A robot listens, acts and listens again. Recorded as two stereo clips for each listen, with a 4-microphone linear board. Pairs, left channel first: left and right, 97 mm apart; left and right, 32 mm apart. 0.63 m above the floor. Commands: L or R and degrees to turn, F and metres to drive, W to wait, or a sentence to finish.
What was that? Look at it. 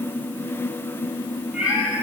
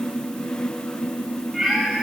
R30
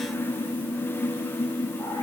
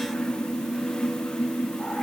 W
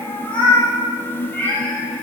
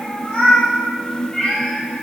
L20
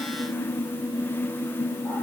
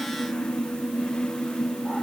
W
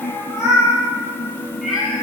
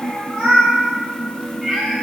Facing the cat meowing, over 4 m away.